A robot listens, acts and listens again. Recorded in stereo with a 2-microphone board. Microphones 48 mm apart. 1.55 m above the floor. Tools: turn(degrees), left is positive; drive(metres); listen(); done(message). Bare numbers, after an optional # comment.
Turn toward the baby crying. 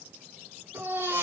turn(-90)
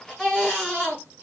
# So it is at 10° left.
turn(10)
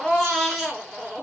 done("Found it: a baby crying, straight ahead.")